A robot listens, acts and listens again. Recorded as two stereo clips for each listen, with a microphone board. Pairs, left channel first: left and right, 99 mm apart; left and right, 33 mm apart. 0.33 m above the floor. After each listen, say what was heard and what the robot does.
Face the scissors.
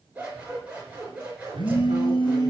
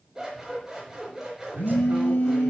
Turn 30° right.
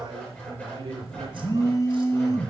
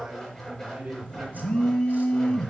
So it is at 15° left. Turn 15° left.
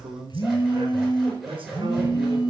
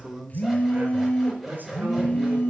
Facing the scissors.